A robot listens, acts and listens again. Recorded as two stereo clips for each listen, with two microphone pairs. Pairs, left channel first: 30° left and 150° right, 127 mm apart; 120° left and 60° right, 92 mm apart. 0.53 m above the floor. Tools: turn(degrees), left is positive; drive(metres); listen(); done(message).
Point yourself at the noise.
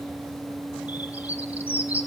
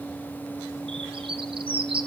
turn(degrees=-70)
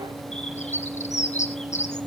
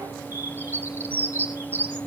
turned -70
turn(degrees=10)
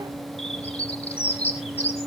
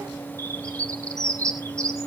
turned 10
done("Facing the bird.")